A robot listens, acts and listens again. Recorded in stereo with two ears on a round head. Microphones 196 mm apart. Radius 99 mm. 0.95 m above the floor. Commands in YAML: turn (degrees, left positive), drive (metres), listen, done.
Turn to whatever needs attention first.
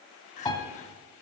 turn: 30
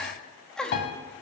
done: "Found it: crying, straight ahead, under 1 m away."